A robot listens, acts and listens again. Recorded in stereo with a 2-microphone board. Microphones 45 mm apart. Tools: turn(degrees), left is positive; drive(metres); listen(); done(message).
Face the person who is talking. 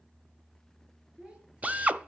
turn(degrees=-25)
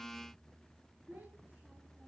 turn(degrees=-130)
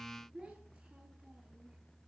turn(degrees=-15)
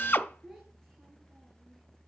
done("Found it: a child speaking, straight ahead, over 4 m away.")